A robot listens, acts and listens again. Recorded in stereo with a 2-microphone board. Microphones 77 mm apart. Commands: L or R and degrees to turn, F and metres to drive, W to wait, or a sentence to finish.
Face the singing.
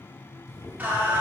R25
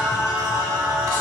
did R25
R115
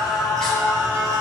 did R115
L10
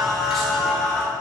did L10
Facing the singing, 2 to 4 m away.